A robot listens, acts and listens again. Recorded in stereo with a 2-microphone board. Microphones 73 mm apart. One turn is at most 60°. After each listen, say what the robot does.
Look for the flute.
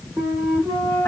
Turn 25° right.
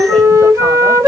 Turn 60° right.
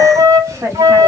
Turn 60° right.
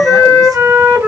Turn 25° right.
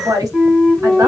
Found it: a flute, straight ahead.